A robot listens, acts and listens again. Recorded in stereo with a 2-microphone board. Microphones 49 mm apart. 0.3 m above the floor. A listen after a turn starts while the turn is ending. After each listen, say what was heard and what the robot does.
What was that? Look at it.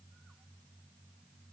Keep listening.
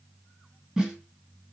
Turn 30° right.
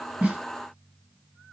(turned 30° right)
Keep listening.
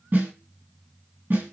So it is at 135° right. Turn 135° right.
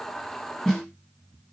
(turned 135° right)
The snare drum is now 10° left. Turn 10° left.
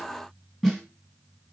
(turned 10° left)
Facing the snare drum, 2 to 4 m away.